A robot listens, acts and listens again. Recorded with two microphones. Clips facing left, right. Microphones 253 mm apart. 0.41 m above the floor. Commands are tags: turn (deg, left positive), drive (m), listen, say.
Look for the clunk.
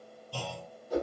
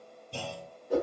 <turn deg="-20"/>
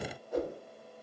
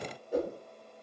<listen/>
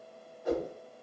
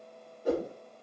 <say>I heard a clunk, but can't make it out now. It was about straight ahead or 140° right.</say>